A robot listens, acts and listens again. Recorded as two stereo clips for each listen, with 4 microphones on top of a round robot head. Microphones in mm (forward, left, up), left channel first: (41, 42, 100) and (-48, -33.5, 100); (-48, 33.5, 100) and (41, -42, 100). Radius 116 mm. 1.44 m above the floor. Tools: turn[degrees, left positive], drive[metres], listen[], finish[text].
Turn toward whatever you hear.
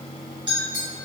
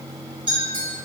Thought: The clink: 85° right.
Action: turn[-85]
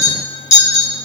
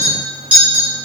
Thought: The clink is now 40° left.
Action: turn[40]
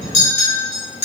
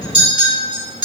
Action: finish[Facing the clink.]